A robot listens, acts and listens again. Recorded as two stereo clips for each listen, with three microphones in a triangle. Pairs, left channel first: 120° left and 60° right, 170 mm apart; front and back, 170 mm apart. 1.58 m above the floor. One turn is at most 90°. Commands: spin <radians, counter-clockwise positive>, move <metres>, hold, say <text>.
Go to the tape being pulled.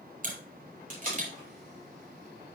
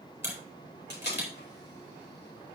spin -0.35
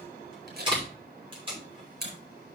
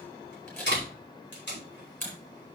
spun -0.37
move 1.0
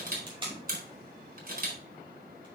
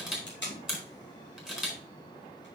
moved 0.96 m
move 1.0
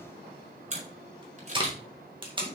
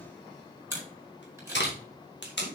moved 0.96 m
move 1.0
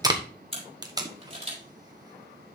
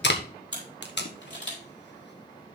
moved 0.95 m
spin 0.17
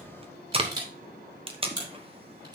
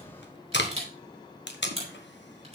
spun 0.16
move 1.0
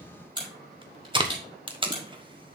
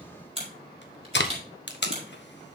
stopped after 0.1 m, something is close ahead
say I am next to the tape being pulled.